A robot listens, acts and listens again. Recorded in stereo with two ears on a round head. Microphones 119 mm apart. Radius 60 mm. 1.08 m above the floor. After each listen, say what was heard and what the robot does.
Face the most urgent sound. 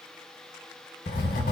Keep listening.
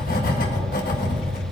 Keep listening.
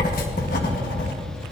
I can't make out anything urgent, only writing.